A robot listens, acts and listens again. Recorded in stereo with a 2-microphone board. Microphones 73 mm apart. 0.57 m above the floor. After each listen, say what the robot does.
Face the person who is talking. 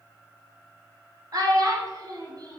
Turn 55° right.
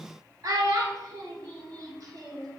Turn 60° right.
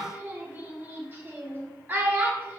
Turn 30° right.
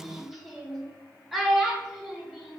Found it: a child speaking, straight ahead, under 1 m away.